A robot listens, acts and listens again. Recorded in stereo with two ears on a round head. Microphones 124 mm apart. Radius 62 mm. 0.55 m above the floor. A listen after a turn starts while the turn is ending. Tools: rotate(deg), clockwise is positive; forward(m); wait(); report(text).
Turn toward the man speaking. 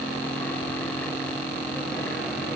wait()
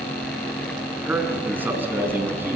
rotate(15)
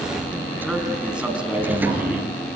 rotate(30)
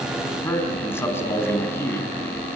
rotate(-20)
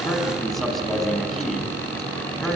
report("Found it: a man speaking, straight ahead, over 4 m away.")